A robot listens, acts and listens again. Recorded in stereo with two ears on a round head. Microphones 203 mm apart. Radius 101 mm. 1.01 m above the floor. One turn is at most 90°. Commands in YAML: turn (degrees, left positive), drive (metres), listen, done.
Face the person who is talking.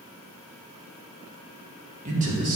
turn: -40
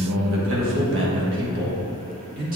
turn: -40
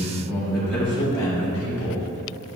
turn: 10
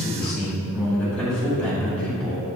done: "Facing the man speaking, 2 to 4 m away."